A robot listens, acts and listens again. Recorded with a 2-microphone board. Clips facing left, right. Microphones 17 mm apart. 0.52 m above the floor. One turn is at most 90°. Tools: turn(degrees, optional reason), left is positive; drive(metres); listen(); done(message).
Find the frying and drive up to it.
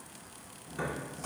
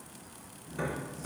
listen()
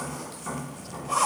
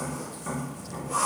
listen()
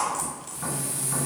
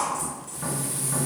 turn(degrees=-40, reason="The frying: about 40° right or 140° right.")
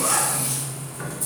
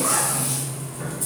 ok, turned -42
turn(degrees=-10, reason="So it is at 10° right.")
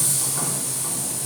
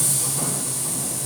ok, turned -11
drive(metres=1.0)
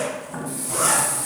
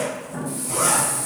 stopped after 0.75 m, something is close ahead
turn(degrees=10, reason="The frying is now 10° left.")
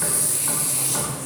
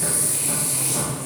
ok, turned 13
done("I am next to the frying.")